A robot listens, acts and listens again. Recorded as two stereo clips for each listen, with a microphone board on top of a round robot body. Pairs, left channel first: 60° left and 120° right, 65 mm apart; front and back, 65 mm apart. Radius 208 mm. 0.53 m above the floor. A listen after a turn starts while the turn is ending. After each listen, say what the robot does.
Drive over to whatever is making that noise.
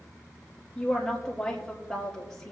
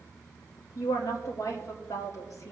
Turn 25° right.
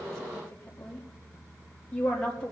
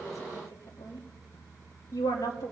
Drive 1.0 m forward.
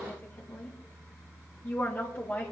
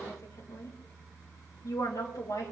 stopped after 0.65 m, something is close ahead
Something is in my way. I am facing the woman speaking but have not reached it.